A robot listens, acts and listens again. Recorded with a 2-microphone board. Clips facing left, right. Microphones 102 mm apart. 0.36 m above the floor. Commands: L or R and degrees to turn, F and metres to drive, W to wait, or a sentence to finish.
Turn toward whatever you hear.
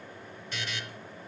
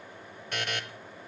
R55
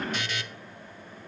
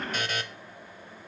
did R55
R55
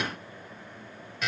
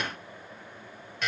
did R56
Facing the buzzer.